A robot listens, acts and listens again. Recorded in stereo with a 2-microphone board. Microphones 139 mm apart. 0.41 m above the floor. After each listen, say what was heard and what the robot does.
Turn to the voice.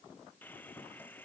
Keep listening.
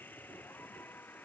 Keep listening.
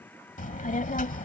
The child speaking: about 75° left or 105° left. Turn 75° left.
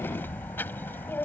So it is at 15° left. Turn 15° left.
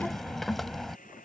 Facing the child speaking.